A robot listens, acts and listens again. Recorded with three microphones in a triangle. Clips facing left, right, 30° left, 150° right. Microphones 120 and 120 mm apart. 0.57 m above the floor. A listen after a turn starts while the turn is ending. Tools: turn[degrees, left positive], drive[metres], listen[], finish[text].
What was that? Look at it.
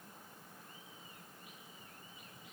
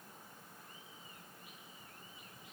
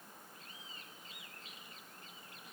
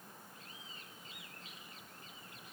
Action: listen[]
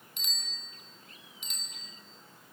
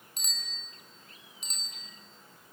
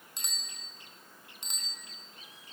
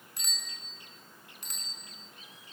Thought: The bicycle bell: 40° right.
Action: turn[-40]
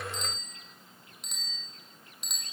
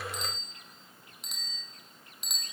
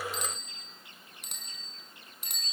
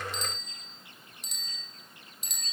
Action: finish[Found it: a bicycle bell, straight ahead.]